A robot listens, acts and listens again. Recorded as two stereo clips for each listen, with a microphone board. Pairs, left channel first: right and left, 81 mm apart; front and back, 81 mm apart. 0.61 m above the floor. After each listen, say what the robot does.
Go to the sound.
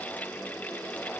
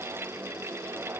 Keep listening.
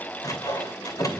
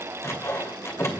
Turn 55° right.
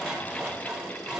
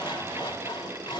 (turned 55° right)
Turn 10° left.
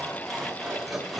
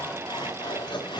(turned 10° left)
Drive 1.0 m forward.
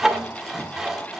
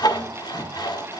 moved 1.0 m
Drive 1.0 m forward.
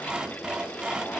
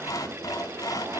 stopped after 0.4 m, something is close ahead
Turn 15° left.
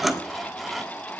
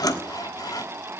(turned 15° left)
I am next to the sawing.